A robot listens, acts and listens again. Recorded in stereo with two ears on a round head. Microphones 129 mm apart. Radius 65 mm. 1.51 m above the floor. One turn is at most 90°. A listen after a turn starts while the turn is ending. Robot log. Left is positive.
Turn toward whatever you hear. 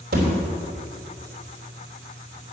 note: The thud: about 75° right or 105° right.
cmd yaw -75
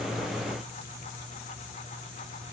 cmd idle
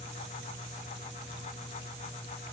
end: I heard a thud, but can't make it out now. It was about straight ahead or 30° right.